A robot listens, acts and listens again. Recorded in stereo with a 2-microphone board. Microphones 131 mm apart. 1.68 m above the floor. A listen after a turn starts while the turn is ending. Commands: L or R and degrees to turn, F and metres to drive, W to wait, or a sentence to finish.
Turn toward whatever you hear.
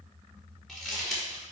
L30
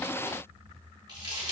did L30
R30
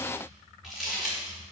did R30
Found it: crumpling, straight ahead, over 4 m away.